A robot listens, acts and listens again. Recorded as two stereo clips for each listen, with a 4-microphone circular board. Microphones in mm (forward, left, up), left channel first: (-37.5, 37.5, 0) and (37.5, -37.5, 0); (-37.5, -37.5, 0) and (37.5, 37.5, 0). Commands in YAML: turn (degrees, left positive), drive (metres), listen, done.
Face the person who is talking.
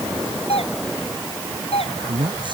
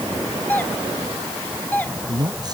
done: "Found it: a man speaking, straight ahead."